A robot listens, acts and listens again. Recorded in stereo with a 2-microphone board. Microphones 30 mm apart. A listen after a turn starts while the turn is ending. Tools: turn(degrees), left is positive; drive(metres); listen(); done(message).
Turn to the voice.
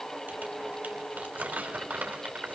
listen()
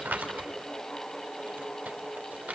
listen()
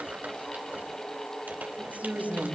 turn(degrees=-55)
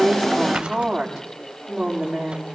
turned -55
done("Facing the woman speaking.")